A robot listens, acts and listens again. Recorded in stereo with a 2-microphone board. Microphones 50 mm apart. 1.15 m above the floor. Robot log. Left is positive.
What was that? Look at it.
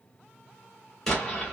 cmd yaw +30
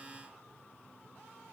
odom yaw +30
cmd idle
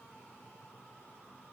end: I heard an explosion, but can't make it out now. It was about 20° right or 140° left.